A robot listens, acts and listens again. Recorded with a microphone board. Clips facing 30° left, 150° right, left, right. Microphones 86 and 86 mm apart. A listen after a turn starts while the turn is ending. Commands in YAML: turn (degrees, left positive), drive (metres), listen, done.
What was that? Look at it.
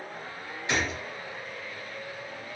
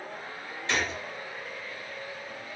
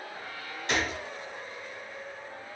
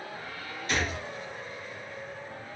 turn: 105
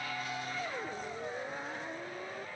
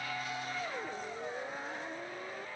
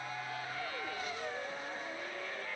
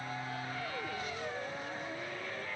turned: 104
done: "Facing where the gunshot came from. I can't hear it now."